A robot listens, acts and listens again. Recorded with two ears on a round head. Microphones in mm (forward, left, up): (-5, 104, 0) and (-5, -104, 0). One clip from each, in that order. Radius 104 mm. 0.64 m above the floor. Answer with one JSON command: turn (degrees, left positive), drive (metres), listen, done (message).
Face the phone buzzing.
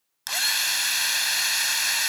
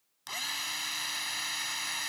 {"listen": true}
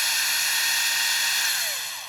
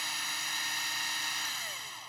{"listen": true}
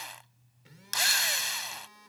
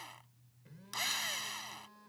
{"turn": 65}
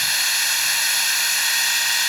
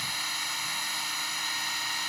{"listen": true}
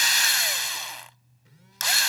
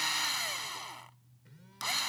{"turn": 20}
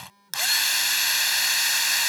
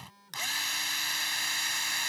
{"done": "Facing the phone buzzing."}